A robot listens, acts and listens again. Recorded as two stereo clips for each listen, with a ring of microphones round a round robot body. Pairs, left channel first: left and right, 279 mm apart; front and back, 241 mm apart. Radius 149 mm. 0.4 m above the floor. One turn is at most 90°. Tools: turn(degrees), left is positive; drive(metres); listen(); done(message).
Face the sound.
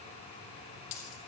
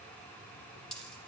turn(degrees=85)
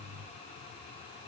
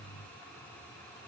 done("I heard a dropped coin from this way, but can't make it out now.")